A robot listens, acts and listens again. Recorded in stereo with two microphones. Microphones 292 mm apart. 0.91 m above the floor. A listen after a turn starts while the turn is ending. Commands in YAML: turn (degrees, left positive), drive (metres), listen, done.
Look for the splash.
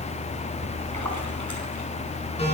turn: -75
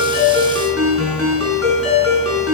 listen: true
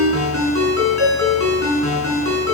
done: "I heard a splash, but can't make it out now. It was about straight ahead or 30° right."